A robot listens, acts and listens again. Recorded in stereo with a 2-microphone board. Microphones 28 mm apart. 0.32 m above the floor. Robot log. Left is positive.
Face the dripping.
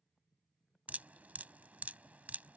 note: The dripping: about 70° right or 110° right.
cmd yaw -70
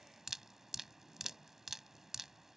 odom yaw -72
note: So it is at 15° right.
cmd yaw -15
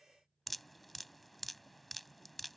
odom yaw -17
end: Facing the dripping.